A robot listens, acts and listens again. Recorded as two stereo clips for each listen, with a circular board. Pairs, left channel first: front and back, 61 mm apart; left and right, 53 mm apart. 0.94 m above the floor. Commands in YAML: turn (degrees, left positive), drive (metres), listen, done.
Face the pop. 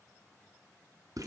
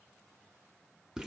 listen: true
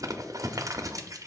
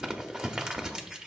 listen: true
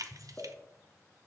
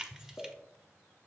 turn: 60
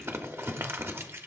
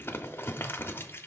done: "Facing where the pop came from. I can't hear it now."